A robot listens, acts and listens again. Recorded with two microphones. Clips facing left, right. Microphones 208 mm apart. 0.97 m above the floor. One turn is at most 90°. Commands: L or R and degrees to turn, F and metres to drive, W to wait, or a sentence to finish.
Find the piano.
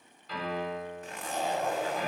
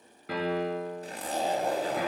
R90
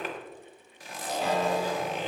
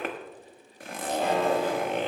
W
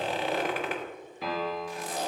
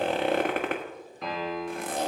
Found it: a piano, straight ahead.